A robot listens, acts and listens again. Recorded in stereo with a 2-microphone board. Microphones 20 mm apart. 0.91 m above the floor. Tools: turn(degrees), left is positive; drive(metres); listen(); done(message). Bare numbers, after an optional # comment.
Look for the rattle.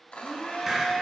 listen()
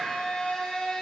listen()
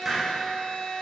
done("I can't make out a rattle to turn to.")